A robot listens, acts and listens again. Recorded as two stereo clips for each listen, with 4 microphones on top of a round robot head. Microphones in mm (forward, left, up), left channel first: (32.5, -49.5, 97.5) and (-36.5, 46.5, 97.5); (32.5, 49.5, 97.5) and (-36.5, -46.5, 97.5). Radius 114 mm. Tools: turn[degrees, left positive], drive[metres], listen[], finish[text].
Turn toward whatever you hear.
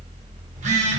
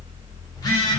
Thought: The phone buzzing: 115° left.
Action: turn[115]
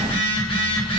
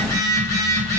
Thought: The phone buzzing is now 10° right.
Action: turn[-10]
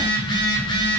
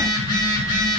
Action: finish[Found it: a phone buzzing, straight ahead.]